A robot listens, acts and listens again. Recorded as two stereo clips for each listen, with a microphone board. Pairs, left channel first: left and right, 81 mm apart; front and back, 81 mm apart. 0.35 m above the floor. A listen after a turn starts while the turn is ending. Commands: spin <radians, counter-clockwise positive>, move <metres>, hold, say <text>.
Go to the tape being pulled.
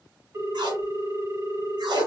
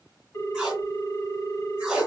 spin -1.66
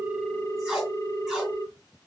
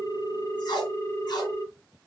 move 1.0
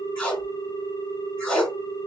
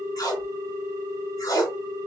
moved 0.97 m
spin 0.35
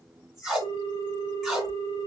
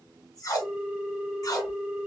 move 1.0
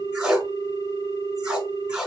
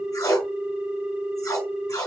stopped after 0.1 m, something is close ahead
spin -0.17
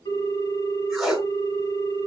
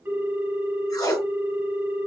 say Arrived at the tape being pulled, straight ahead.